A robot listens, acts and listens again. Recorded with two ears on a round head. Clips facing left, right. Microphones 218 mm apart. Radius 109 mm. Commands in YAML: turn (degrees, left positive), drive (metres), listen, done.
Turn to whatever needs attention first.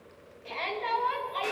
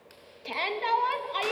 turn: -55
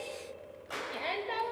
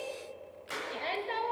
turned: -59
done: "Facing the shout, 2 to 4 m away."